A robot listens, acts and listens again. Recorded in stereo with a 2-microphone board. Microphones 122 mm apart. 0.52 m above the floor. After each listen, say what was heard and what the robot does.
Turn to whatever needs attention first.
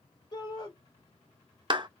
The shout: about 35° left or 145° left. Turn 35° left.
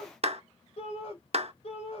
So it is at 105° left. Turn 105° left.
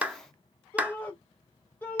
The shout is now 20° left. Turn 20° left.
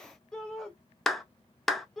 Facing the shout.